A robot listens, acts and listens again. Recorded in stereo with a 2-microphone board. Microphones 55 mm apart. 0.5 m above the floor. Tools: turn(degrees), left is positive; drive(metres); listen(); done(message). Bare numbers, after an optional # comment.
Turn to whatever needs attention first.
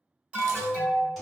# The alarm: about 20° right or 160° right.
turn(-20)
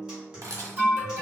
# So it is at 135° right.
turn(-135)
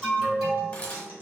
# The alarm is now 10° right.
turn(-10)
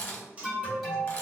done("Facing the alarm, 1 to 2 m away.")